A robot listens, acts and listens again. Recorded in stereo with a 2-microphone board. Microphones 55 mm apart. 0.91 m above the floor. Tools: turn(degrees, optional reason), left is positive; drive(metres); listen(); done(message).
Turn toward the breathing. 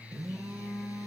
listen()
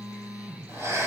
turn(degrees=-55, reason="The breathing: about 55° right or 125° right.")
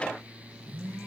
listen()
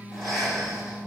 done("Found it: breathing, straight ahead, over 4 m away.")